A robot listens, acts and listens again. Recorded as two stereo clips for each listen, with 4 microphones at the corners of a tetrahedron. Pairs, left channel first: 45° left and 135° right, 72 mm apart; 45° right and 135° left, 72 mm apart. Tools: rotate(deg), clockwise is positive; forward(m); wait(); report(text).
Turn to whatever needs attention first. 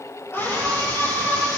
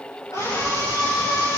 rotate(10)
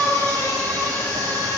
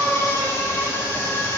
report("Found it: a scream, straight ahead.")